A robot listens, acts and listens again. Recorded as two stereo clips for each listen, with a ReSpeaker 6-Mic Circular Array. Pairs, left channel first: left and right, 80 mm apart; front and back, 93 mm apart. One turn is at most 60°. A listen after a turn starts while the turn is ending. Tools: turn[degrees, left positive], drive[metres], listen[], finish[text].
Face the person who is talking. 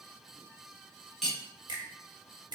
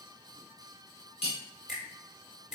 Action: listen[]
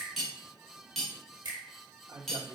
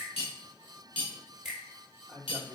Thought: The man speaking: 65° right.
Action: turn[-60]
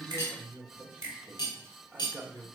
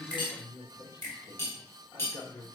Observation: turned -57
Thought: The man speaking is now 10° right.
Action: turn[-10]
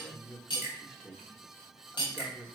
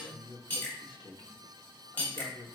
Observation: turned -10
Action: finish[Found it: a man speaking, straight ahead, under 1 m away.]